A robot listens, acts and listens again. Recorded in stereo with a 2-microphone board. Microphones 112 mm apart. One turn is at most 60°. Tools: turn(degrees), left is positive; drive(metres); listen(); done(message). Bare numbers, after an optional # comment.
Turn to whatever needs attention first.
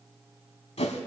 listen()
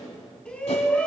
turn(30)
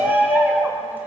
# So it is at 15° right.
turn(-15)
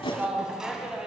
done("Facing the shout, 2 to 4 m away.")